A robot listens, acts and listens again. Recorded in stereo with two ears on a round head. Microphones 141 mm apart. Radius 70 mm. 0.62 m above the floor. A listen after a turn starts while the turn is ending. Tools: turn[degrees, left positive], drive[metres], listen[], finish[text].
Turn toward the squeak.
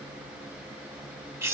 Action: listen[]
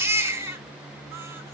Action: listen[]
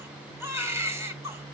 Action: finish[I can't make out a squeak, only a baby crying.]